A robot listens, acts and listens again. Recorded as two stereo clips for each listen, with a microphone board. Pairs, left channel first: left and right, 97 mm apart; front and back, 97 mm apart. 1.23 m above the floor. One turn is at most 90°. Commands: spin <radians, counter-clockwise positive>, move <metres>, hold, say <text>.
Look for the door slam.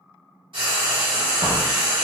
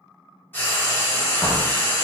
spin -1.57
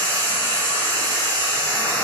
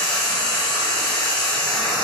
spin -0.26
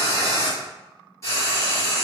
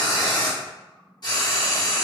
say I heard a door slam from this way, but can't make it out now.